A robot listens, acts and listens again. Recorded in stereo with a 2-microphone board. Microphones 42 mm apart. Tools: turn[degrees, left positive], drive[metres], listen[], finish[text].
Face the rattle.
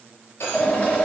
Action: turn[90]
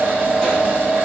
Action: listen[]
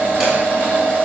Action: listen[]
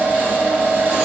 Action: finish[Facing where the rattle came from. I can't hear it now.]